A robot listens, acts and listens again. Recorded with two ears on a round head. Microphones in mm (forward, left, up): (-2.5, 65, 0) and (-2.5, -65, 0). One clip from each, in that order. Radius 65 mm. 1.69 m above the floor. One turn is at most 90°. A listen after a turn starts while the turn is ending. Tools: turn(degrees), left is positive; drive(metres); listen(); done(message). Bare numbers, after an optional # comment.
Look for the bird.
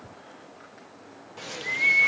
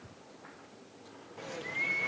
# The bird: about 65° left or 115° left.
turn(65)
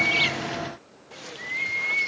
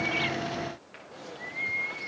# So it is at 50° left.
turn(50)
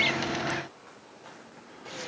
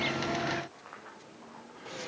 # The bird is now 10° left.
turn(10)
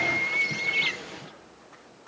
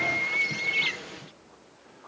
done("Found it: a bird, straight ahead.")